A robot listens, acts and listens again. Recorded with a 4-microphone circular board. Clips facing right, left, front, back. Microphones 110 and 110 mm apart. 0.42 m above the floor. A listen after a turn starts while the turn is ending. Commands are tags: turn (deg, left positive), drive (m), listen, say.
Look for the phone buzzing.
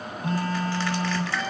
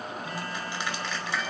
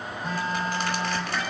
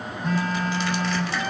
<turn deg="-80"/>
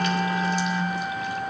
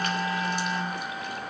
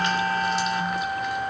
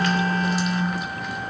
<turn deg="-10"/>
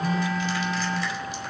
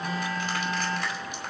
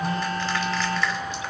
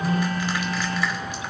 <say>Facing the phone buzzing.</say>